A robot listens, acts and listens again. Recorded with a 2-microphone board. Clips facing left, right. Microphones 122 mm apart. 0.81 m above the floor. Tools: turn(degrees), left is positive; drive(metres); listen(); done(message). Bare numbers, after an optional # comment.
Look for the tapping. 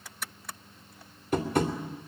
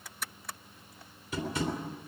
# The tapping: about 55° left or 125° left.
turn(55)
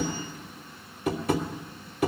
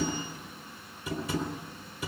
# So it is at 70° left.
turn(70)
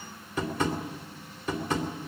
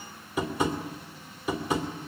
# The tapping is now 10° right.
turn(-10)
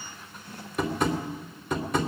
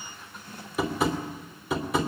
done("Found it: tapping, straight ahead.")